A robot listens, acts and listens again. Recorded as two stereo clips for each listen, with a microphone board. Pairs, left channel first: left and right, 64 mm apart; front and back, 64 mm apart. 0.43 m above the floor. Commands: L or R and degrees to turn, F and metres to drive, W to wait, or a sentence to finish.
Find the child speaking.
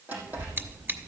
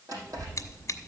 R105
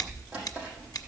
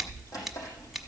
L15
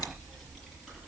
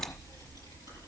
Facing the child speaking, over 4 m away.